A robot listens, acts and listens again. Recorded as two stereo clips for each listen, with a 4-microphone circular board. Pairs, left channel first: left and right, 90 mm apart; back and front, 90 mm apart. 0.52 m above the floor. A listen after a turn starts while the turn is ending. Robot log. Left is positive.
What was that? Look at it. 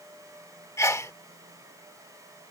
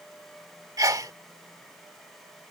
note: The sneeze: 40° left.
cmd yaw +40
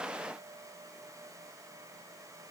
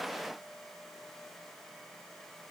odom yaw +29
note: Nothing new. It was at 10° left.
cmd yaw +10
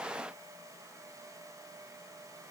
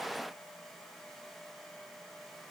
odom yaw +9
end: I heard a sneeze from this way, but can't make it out now.